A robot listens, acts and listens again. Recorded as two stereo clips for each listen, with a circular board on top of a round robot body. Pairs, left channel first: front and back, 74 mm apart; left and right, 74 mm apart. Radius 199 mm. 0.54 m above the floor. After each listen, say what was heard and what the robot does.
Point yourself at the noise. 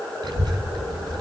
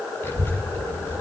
The child speaking: 150° left. Turn 150° left.
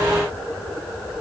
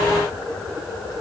Keep listening.
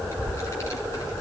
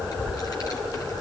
The child speaking is now 50° left. Turn 50° left.
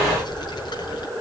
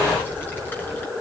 The child speaking is now 25° left. Turn 25° left.
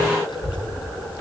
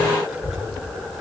Facing the child speaking, over 4 m away.